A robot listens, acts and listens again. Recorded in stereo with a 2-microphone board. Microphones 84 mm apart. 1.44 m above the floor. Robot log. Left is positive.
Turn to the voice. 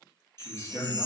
note: The man speaking: about 35° left or 145° left.
cmd yaw +35
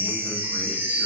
cmd idle
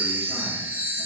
cmd idle
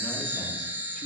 end: I heard a man speaking, but can't make it out now. It was about straight ahead or 110° left.